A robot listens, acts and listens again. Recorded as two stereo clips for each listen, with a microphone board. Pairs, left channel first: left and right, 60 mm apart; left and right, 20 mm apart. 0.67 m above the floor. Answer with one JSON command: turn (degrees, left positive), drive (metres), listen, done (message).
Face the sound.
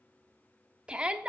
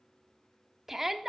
{"turn": -15}
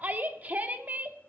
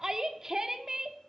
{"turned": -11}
{"turn": -25}
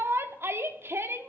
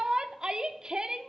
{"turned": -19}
{"turn": -130}
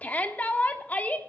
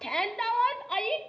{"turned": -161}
{"turn": 30}
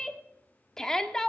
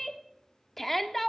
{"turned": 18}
{"turn": 10}
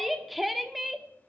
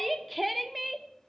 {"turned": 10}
{"done": "Found it: a shout, straight ahead."}